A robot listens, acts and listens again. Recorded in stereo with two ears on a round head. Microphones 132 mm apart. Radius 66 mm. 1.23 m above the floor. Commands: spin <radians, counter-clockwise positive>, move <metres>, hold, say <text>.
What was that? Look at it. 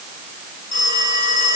spin 1.05
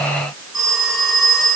say Facing the phone ringing, over 4 m away.